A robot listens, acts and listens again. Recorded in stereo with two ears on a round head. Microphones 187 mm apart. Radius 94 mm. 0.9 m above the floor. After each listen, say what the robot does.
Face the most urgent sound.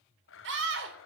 Turn 65° right.
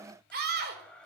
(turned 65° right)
Turn 50° right.
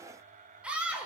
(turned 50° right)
Facing the scream.